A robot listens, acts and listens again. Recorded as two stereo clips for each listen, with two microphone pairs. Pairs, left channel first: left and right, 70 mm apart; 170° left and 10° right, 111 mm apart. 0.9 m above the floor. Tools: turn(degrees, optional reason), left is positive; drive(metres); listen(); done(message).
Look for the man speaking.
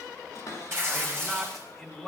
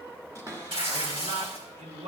done("Found it: a man speaking, straight ahead.")